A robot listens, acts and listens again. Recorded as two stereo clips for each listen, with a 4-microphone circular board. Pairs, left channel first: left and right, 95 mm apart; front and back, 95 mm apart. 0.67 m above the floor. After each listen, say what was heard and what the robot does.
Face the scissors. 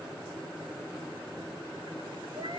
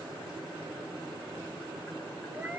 Keep listening.
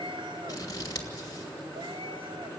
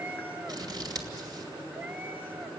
The scissors: 135° left. Turn 135° left.
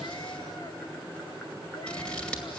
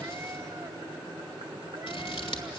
The scissors is now 10° left. Turn 10° left.
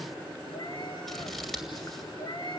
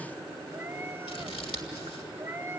Found it: scissors, straight ahead, 2 to 4 m away.